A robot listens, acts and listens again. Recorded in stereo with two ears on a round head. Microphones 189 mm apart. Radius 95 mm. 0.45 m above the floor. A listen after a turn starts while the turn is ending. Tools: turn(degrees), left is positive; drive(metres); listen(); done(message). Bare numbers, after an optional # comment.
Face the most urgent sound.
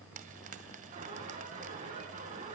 # The alarm: about 40° right or 140° right.
turn(-40)
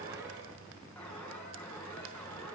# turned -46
done("Found it: an alarm, straight ahead, over 4 m away.")